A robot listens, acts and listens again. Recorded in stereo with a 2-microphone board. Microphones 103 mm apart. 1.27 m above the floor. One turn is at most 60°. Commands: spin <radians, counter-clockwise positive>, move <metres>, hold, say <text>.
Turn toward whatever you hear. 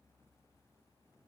hold
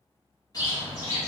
spin 0.70
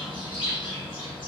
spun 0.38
spin 1.05
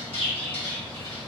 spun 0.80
spin 1.05
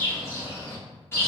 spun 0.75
spin 0.44
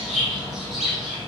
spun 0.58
say Found it: a bird, straight ahead, 1 to 2 m away.